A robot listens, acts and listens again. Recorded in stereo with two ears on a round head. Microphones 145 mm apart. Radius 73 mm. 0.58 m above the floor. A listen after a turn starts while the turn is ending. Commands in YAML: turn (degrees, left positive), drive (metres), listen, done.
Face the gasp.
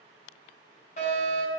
listen: true
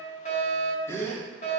turn: 15
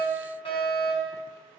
listen: true
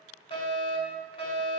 done: "I heard a gasp, but can't make it out now. It was about straight ahead or 150° left."